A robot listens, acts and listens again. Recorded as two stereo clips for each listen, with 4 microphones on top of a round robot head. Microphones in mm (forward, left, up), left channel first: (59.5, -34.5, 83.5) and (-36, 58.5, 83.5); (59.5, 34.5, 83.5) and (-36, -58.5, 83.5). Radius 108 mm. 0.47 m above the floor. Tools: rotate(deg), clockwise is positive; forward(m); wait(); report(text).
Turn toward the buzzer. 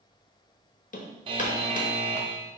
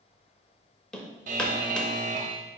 rotate(170)
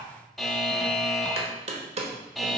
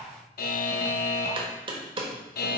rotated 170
rotate(-45)
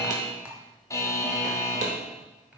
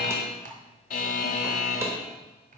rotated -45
rotate(-25)
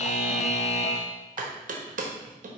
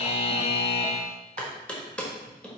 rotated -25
report("Facing the buzzer, under 1 m away.")